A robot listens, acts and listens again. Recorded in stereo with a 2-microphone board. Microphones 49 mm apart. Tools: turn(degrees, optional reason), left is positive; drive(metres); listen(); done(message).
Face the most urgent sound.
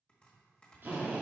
listen()
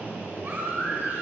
turn(degrees=-45, reason="The baby crying: about 45° right or 135° right.")
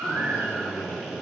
turn(degrees=-85, reason="So it is at 85° right.")
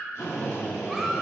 listen()
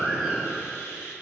done("Facing the baby crying.")